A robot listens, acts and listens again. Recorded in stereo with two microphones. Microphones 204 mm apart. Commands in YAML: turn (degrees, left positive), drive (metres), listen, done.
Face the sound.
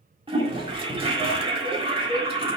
turn: -25
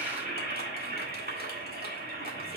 turn: -130
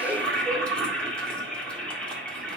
done: "Facing the toilet flushing, 1 to 2 m away."